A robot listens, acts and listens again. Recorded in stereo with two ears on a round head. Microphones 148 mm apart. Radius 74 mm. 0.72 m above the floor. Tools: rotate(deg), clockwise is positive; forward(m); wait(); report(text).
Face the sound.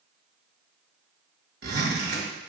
rotate(65)
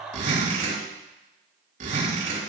rotate(50)
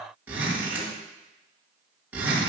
rotate(10)
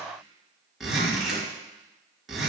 report("Facing the zipper.")